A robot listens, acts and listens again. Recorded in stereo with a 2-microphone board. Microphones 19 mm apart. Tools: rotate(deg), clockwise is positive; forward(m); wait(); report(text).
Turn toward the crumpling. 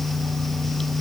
wait()
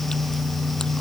wait()
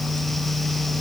report("I can't make out crumpling.")